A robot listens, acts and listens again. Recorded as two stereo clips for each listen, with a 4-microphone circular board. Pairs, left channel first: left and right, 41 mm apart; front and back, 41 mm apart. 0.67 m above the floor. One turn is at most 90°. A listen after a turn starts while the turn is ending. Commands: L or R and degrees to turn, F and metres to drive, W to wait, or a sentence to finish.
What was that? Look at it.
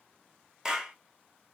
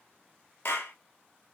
R15
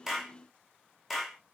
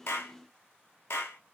Facing the clap.